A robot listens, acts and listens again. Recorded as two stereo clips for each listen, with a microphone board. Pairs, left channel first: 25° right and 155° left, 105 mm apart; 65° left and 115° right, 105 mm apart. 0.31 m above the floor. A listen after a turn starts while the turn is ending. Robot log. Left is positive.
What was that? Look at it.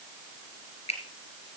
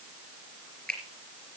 note: The finger snap: 20° right.
cmd yaw -20
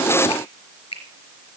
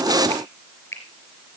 end: Found it: a finger snap, straight ahead, over 4 m away.